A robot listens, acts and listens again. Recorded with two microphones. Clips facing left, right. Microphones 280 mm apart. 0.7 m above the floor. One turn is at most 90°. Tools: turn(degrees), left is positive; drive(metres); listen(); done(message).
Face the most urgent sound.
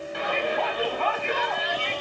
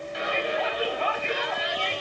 turn(degrees=65)
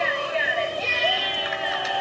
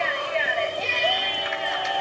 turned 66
done("Found it: a shout, straight ahead, over 4 m away.")